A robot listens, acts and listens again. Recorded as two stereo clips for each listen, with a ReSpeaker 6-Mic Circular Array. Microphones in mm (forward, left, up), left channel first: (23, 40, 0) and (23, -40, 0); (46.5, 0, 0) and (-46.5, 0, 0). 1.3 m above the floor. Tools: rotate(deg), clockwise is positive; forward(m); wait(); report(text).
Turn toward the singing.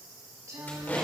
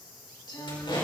rotate(40)
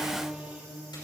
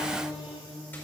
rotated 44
rotate(15)
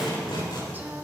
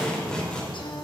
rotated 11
wait()
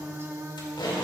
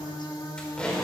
rotate(40)
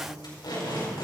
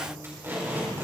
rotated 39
wait()
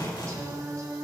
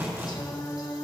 rotate(45)
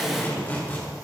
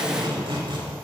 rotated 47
wait()
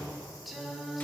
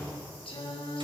report("Facing the singing, 1 to 2 m away.")